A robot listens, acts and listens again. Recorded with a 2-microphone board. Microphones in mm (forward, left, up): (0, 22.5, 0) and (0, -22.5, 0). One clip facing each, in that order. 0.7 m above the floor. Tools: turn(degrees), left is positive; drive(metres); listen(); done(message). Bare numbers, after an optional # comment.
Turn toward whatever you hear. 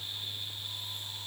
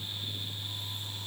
listen()
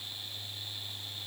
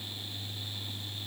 listen()
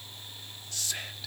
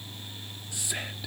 # The whispering: about 15° right or 165° right.
turn(-15)
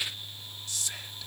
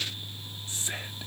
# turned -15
# So it is at 150° right.
turn(-150)
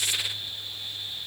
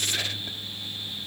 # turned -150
listen()
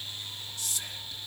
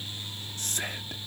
# The whispering is now 55° right.
turn(-55)
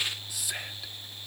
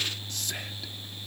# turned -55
# The whispering is now 10° left.
turn(10)
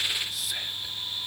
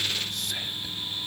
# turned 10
done("Facing the whispering, 1 to 2 m away.")